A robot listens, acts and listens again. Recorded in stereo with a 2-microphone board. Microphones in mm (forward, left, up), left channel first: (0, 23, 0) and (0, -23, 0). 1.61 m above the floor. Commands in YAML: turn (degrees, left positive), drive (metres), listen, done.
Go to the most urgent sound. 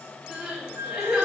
turn: -30
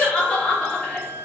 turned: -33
turn: 20
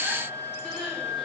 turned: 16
drive: 1.0
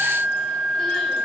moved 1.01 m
listen: true
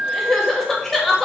drive: 1.0
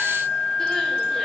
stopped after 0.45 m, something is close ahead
listen: true
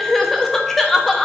done: "Arrived at the crying, straight ahead."